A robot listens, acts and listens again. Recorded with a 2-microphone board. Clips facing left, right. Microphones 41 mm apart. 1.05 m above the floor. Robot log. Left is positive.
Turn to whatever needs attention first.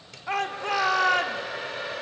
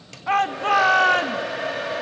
note: The shout: about 55° right or 125° right.
cmd yaw -55
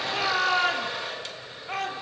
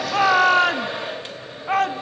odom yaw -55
note: So it is at 65° right.
cmd yaw -65
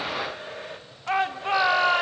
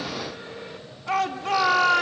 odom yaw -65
note: The shout is now 20° left.
cmd yaw +20
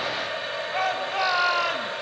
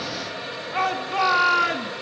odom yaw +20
end: Facing the shout, 1 to 2 m away.